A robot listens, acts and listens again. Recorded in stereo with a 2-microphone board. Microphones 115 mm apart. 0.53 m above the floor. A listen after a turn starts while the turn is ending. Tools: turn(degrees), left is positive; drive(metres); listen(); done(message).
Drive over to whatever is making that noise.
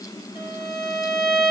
turn(degrees=-25)
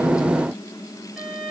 drive(metres=1.0)
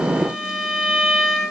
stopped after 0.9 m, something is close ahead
done("Arrived at the violin, straight ahead.")